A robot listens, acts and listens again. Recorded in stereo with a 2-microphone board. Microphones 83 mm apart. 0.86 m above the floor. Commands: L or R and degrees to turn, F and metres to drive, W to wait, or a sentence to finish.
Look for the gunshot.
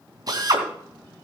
W
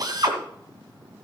W
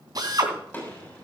L20
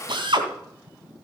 W
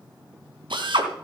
I heard a gunshot, but can't make it out now. It was about straight ahead or 140° left.